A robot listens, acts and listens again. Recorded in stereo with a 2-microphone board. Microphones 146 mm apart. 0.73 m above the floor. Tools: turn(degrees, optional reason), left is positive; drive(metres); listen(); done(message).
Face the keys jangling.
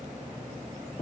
listen()
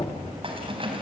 turn(degrees=-40, reason="The keys jangling: about 40° right or 140° right.")
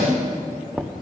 done("Facing the keys jangling, 2 to 4 m away.")